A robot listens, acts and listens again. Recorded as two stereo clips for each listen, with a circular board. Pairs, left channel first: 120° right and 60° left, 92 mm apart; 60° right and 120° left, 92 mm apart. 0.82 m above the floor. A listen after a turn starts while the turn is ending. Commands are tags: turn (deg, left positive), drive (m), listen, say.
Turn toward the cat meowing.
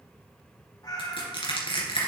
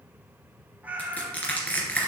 <turn deg="-165"/>
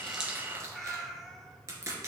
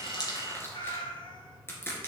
<turn deg="-30"/>
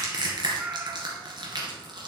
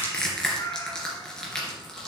<turn deg="-10"/>
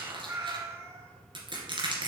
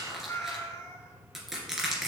<say>Found it: a cat meowing, straight ahead, 1 to 2 m away.</say>